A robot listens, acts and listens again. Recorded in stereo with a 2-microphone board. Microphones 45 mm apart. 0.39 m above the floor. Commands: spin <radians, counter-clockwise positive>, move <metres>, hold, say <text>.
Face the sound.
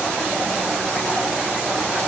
hold
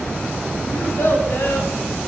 spin 1.13
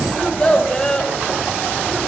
spin 0.26
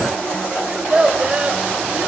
spin -0.44
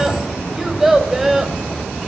say Found it: a child speaking, straight ahead, 1 to 2 m away.